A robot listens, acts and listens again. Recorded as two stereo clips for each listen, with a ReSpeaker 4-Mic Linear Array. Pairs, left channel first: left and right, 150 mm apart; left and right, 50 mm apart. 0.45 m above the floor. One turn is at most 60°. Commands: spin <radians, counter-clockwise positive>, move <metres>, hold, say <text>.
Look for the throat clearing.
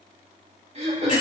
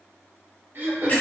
spin -0.79
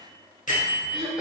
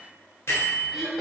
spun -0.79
say Found it: throat clearing, straight ahead.